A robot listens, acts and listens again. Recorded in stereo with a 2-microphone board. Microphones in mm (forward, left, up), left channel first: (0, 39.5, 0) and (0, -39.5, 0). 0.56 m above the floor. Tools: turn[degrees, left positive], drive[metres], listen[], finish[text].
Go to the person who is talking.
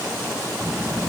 Action: turn[-30]
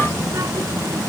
Thought: So it is at 135° right.
Action: turn[-135]
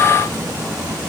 Thought: The child speaking is now 60° right.
Action: turn[-60]
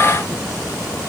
Thought: The child speaking is now 10° right.
Action: turn[-10]
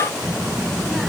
Action: drive[1.0]
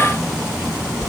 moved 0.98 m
Action: drive[1.0]
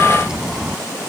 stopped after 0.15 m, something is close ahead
Thought: The child speaking is now 10° right.
Action: turn[-10]
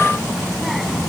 Action: finish[Blocked. The child speaking is further on, straight ahead.]